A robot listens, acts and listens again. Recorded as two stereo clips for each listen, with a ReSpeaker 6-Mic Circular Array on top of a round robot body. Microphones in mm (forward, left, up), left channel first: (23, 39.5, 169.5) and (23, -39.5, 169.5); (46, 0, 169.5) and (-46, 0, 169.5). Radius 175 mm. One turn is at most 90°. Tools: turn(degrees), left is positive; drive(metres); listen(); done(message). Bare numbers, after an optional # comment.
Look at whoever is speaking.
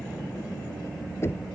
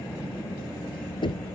listen()
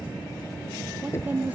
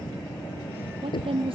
# The woman speaking: 165° right.
turn(-90)
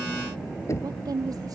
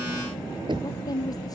# The woman speaking is now 50° right.
turn(-50)
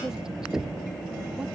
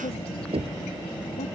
listen()
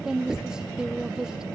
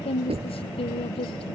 # The woman speaking is now 10° right.
turn(-10)
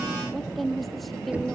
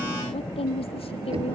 done("Facing the woman speaking.")